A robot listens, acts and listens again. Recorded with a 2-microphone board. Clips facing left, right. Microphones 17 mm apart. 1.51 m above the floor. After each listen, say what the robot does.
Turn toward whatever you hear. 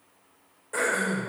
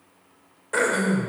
Turn 40° right.
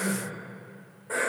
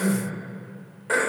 Turn 100° right.
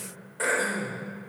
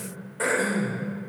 Facing the throat clearing.